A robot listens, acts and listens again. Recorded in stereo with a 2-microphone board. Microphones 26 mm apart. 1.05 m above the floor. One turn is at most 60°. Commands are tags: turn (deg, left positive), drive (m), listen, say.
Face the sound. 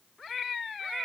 <listen/>
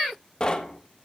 <turn deg="35"/>
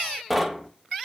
<say>Found it: knocking, straight ahead.</say>